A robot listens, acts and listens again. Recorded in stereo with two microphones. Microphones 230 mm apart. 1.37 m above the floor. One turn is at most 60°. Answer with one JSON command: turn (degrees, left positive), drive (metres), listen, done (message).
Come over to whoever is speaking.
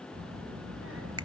{"turn": -60}
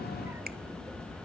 {"turn": -10}
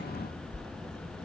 {"drive": 1.0}
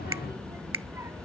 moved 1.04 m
{"turn": -10}
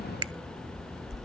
{"drive": 1.0}
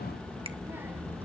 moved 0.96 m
{"turn": -10}
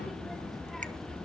{"drive": 1.0}
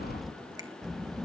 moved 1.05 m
{"drive": 1.0}
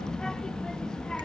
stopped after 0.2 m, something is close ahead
{"done": "Arrived at the child speaking, straight ahead."}